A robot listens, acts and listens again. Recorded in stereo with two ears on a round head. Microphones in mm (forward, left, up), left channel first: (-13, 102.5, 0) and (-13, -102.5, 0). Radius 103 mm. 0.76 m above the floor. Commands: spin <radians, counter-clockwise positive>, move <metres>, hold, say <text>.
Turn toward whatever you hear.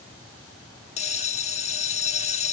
spin 0.52
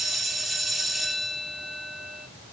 say Facing the bell.